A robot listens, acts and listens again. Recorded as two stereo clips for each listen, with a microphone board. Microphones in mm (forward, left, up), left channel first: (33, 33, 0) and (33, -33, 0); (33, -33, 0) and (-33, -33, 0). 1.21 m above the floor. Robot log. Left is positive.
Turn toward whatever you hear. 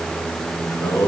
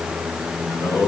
note: The singing: 45° left.
cmd yaw +45
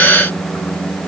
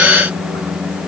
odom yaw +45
cmd idle
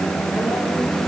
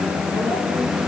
note: The singing is now 10° left.
cmd yaw +10
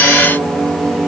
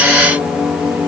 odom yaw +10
note: The singing is now 10° right.
cmd yaw -10
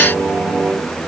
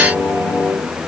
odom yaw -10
note: The singing is now 10° right.
cmd yaw -10
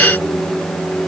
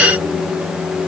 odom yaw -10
end: Found it: singing, straight ahead, over 4 m away.